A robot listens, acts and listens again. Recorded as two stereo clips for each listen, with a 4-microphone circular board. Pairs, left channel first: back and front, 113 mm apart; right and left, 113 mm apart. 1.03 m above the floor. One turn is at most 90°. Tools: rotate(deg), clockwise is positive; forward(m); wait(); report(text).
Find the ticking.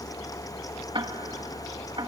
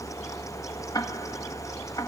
rotate(35)
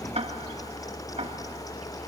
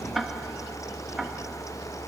report("Found it: ticking, straight ahead.")